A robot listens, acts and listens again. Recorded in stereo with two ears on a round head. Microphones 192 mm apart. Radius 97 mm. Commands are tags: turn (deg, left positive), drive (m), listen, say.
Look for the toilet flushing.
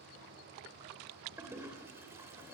<turn deg="-30"/>
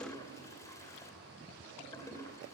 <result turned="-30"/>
<turn deg="15"/>
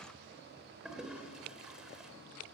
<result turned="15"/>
<say>Facing the toilet flushing, 2 to 4 m away.</say>